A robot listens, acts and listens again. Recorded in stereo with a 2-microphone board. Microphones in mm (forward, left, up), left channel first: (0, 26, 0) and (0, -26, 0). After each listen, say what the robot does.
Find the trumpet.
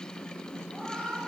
Keep listening.
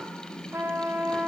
Turn 60° right.
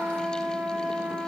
Turn 45° right.
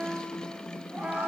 Turn 15° right.
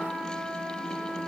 Facing the trumpet, under 1 m away.